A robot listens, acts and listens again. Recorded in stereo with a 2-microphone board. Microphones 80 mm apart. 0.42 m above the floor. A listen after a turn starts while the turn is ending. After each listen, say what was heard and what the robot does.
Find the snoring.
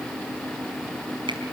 Keep listening.
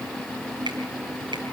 Keep listening.
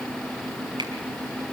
I can't make out snoring to turn to.